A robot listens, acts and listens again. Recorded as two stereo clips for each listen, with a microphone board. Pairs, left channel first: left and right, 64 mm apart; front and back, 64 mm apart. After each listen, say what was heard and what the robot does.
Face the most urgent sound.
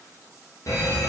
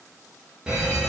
The fire alarm: 105° left. Turn 105° left.
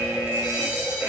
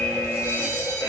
The fire alarm is now 15° right. Turn 15° right.
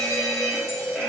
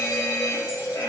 Found it: a fire alarm, straight ahead.